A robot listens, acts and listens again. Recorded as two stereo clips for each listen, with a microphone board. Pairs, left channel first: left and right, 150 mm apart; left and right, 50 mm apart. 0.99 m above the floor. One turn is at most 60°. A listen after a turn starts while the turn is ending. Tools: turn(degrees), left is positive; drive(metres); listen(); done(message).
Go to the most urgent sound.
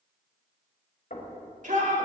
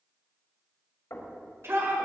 turn(degrees=-60)
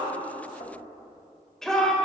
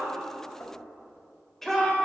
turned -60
drive(metres=1.0)
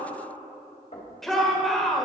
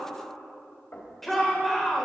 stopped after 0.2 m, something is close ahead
done("Something is in my way. I am facing the shout but have not reached it.")